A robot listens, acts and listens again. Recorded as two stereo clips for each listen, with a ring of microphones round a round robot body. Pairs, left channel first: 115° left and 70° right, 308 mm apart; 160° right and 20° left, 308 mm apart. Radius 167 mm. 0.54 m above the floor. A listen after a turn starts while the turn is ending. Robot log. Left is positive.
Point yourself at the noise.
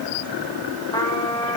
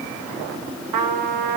note: The trumpet: 35° left.
cmd yaw +35
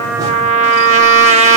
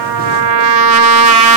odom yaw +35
end: Facing the trumpet, 1 to 2 m away.